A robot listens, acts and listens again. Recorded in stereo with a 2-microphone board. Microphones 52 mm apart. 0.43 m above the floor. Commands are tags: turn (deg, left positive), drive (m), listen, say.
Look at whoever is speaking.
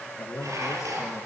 <turn deg="90"/>
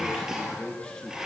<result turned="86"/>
<turn deg="10"/>
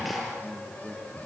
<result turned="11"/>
<say>Facing the man speaking, over 4 m away.</say>